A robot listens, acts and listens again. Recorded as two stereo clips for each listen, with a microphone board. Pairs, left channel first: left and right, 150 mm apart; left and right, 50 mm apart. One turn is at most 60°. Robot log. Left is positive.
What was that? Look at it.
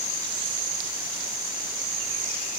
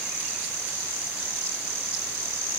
cmd idle
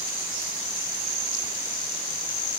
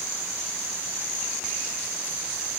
cmd idle
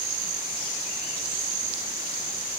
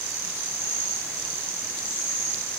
end: I can't make out anything to turn to.